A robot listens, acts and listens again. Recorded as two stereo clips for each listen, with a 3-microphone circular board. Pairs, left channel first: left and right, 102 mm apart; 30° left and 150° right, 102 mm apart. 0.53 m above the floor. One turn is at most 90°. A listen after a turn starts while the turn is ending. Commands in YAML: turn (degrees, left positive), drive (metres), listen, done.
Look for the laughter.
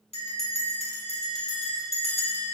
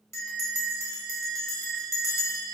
listen: true
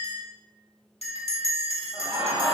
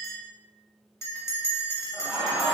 turn: -70
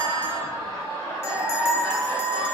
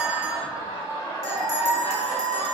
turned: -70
turn: 25
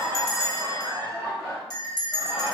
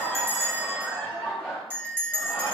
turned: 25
turn: 10
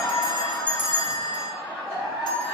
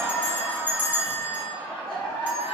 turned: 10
done: "Found it: laughter, straight ahead, 1 to 2 m away."